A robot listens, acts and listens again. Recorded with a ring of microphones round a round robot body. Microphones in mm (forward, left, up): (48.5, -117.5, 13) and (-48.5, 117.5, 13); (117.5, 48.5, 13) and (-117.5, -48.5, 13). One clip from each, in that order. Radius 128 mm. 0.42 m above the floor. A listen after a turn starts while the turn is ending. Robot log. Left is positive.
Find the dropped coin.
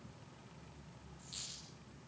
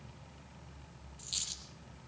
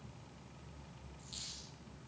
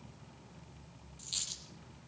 note: The dropped coin: 155° left.
cmd yaw +155
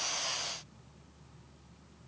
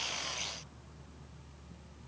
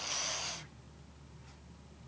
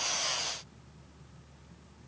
end: I heard a dropped coin from this way, but can't make it out now.